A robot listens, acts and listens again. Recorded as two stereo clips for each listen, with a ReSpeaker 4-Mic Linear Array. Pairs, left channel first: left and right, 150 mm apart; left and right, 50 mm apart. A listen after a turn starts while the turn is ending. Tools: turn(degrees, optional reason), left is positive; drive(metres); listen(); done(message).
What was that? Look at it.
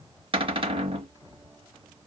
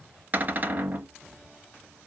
turn(degrees=-35, reason="The cupboard door: about 35° right or 145° right.")
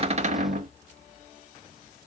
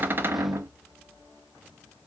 turn(degrees=-105, reason="So it is at 105° right.")
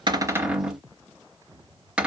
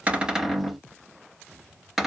done("Facing the cupboard door.")